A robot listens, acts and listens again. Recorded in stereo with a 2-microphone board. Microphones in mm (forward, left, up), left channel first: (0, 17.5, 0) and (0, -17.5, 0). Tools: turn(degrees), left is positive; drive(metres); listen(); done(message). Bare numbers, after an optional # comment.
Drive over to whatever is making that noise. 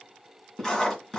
# The writing: about 15° left or 165° left.
turn(15)
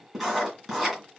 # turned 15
drive(1.0)
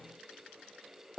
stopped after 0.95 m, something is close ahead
done("Arrived at the writing, straight ahead.")